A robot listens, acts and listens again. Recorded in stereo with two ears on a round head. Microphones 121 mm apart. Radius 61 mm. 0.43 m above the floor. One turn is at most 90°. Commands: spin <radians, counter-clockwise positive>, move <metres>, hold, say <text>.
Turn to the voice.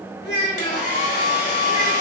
spin 0.44
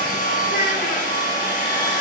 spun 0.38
hold
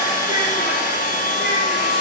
hold
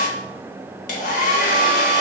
say I heard a child speaking, but can't make it out now. It was about 5° left or 135° left.